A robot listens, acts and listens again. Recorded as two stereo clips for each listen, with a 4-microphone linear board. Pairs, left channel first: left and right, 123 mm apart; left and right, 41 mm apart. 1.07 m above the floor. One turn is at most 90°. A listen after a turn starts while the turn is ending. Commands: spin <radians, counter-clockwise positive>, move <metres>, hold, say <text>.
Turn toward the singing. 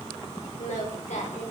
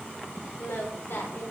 spin 1.31
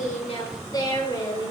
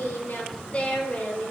spin 0.61
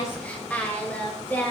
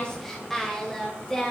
spin 0.26
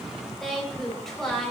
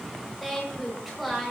say Facing the singing, over 4 m away.